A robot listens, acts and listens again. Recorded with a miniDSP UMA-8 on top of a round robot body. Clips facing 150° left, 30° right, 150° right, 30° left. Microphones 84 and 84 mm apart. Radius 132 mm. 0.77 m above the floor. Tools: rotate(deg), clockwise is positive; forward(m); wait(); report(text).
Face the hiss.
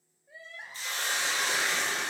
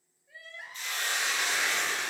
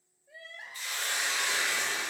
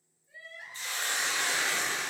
rotate(-95)
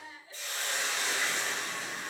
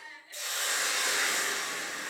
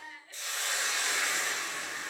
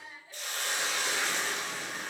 rotate(10)
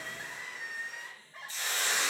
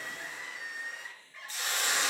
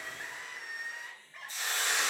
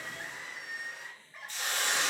report("Found it: a hiss, straight ahead.")